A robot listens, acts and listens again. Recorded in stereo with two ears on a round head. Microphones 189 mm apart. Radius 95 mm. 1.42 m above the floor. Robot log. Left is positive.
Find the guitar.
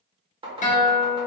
note: The guitar: about 35° left or 145° left.
cmd yaw +35
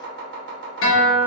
note: So it is at 105° left.
cmd yaw +105
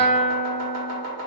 note: The guitar is now 30° left.
cmd yaw +30
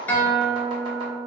note: The guitar is now 10° left.
cmd yaw +10
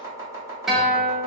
end: Found it: a guitar, straight ahead, under 1 m away.